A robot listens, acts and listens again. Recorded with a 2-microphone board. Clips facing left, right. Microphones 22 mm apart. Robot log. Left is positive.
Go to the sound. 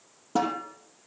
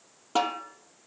note: The snare drum: about 50° right or 130° right.
cmd yaw -50
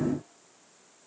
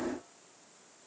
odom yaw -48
cmd idle
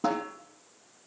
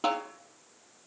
note: So it is at 80° right.
cmd yaw -80
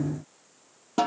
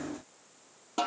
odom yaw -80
cmd fwd 1.0
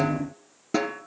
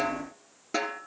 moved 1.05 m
cmd fwd 1.0
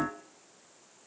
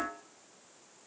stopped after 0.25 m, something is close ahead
cmd idle
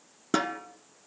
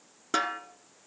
end: I am next to the snare drum.